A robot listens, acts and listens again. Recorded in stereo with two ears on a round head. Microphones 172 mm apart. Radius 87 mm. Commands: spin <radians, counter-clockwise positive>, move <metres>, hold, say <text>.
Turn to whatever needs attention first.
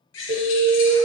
spin -1.57
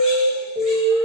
spin -0.17
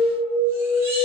say Facing the alarm.